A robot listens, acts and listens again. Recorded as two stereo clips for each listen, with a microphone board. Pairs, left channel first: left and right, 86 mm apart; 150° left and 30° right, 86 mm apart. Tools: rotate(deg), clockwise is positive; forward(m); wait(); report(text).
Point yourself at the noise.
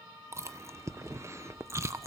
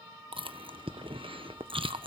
rotate(35)
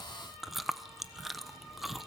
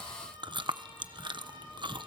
report("Facing the chewing, 1 to 2 m away.")